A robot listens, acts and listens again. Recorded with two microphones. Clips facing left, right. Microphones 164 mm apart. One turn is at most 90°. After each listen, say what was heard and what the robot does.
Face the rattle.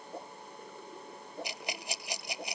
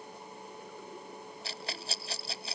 The rattle: about 15° left or 165° left. Turn 15° left.
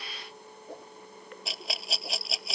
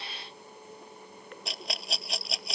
Facing the rattle.